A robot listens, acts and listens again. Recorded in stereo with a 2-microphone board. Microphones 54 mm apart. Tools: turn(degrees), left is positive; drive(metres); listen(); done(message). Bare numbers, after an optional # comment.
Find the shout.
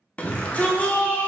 # The shout: about 25° left or 155° left.
turn(25)
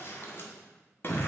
# So it is at 125° left.
turn(125)
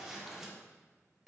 # The shout is now 10° right.
turn(-10)
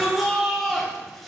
done("Facing the shout.")